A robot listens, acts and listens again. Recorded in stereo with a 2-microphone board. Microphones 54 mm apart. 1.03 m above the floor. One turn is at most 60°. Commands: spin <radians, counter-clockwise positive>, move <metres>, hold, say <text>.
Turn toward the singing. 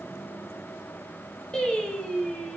spin 0.52
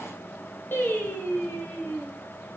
spin 1.05
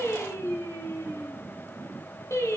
spin 1.05
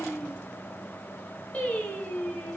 spin 0.44
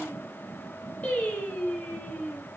spin 0.44
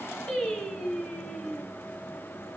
spin 0.26
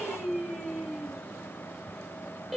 say Found it: singing, straight ahead, over 4 m away.